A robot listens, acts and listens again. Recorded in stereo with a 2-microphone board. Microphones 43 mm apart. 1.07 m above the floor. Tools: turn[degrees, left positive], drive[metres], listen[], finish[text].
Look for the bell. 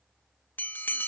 Thought: The bell: about 55° left or 125° left.
Action: turn[55]
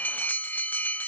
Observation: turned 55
Thought: So it is at 60° left.
Action: turn[60]
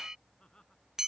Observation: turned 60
Thought: The bell is now 20° right.
Action: turn[-20]
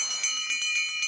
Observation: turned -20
Action: finish[Facing the bell.]